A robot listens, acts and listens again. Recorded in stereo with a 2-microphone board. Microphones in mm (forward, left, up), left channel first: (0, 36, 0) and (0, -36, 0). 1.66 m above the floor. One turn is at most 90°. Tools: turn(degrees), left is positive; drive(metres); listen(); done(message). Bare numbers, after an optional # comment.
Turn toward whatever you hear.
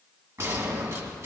# The gunshot: about 45° right or 135° right.
turn(-45)
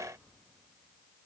listen()
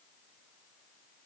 done("I heard a gunshot, but can't make it out now. It was about straight ahead or 90° right.")